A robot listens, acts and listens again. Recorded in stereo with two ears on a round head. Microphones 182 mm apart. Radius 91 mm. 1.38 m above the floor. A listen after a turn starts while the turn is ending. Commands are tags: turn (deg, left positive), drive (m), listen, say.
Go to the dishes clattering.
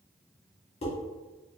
<turn deg="30"/>
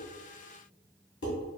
<turn deg="120"/>
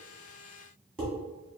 <drive m="1.0"/>
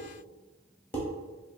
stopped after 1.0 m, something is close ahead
<turn deg="10"/>
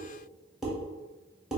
<say>I am next to the dishes clattering.</say>